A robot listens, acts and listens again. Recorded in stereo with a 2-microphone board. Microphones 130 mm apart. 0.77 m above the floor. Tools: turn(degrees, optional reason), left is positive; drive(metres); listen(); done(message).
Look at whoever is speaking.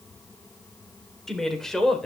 turn(degrees=30)
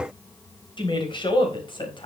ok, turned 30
turn(degrees=145, reason="So it is at 145° left.")
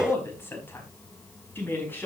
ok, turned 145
turn(degrees=15, reason="The woman speaking is now 15° left.")
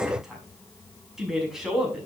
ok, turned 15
done("Found it: a woman speaking, straight ahead, over 4 m away.")